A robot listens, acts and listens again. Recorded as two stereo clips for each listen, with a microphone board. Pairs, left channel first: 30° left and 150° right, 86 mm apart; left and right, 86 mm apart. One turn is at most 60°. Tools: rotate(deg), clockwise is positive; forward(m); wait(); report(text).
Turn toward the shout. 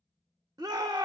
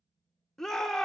rotate(-60)
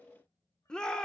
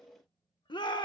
rotate(-60)
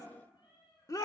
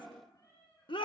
rotate(-60)
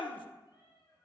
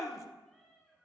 rotate(-40)
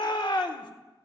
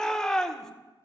report("Facing the shout.")